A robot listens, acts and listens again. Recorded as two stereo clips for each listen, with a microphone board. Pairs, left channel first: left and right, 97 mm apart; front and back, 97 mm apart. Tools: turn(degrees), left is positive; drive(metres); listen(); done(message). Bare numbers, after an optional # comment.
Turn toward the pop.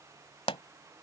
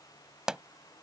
# The pop: 95° left.
turn(95)
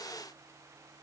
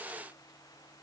done("Facing where the pop came from. I can't hear it now.")